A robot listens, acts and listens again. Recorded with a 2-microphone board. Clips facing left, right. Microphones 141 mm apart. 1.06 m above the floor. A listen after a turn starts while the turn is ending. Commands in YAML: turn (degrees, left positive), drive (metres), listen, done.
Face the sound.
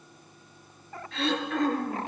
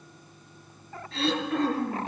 turn: -35
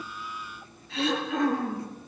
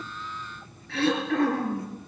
turn: -110
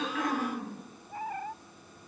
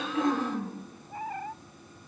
turn: -10
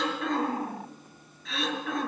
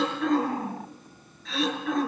done: "Facing the throat clearing, over 4 m away."